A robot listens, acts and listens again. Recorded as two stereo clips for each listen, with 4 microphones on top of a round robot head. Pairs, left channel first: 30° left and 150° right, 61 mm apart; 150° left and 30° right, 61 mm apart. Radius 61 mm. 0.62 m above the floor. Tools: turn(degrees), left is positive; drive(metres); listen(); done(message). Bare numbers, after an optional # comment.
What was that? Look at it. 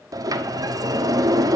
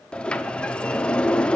# The sliding door: 140° right.
turn(-140)
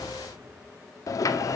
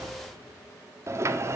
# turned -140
done("Found it: a sliding door, straight ahead.")